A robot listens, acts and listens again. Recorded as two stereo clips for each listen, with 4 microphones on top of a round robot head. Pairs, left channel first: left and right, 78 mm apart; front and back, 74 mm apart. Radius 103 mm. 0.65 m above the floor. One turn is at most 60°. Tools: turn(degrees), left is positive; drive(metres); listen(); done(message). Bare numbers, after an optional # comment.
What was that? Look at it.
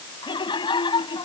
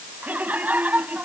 # The laughter: 110° left.
turn(60)
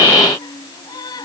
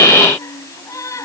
# The laughter is now 45° left.
turn(45)
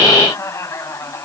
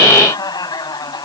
# The laughter is now 30° left.
turn(30)
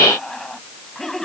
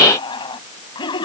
done("Found it: laughter, straight ahead.")